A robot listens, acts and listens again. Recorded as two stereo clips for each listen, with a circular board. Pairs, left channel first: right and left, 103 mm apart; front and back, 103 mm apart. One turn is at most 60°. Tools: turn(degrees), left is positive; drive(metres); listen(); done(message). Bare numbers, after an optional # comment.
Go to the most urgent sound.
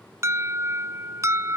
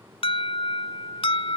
# The alarm: 25° left.
turn(25)
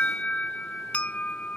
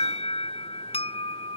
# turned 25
# The alarm is now 15° right.
turn(-15)
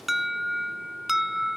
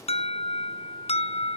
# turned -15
drive(1.0)
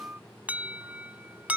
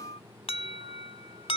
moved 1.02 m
# The alarm is now 15° left.
turn(15)
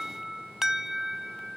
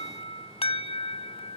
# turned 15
drive(1.0)
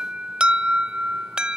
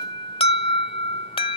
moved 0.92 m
# The alarm is now 10° left.
turn(10)
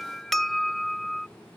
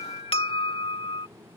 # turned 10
drive(1.0)
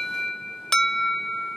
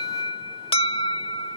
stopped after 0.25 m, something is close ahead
done("I am next to the alarm.")